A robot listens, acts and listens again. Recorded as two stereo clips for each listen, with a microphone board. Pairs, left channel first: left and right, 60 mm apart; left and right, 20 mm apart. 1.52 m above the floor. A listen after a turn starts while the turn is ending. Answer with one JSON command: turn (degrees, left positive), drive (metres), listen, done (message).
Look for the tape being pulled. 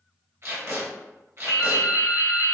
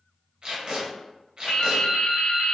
{"turn": -45}
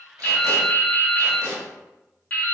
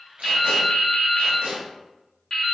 {"turn": -95}
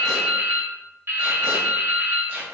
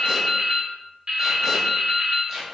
{"listen": true}
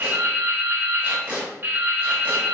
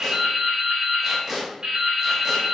{"turn": -30}
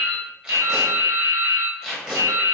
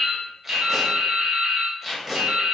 {"turn": -15}
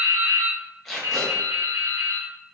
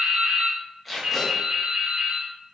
{"done": "Facing the tape being pulled, 1 to 2 m away."}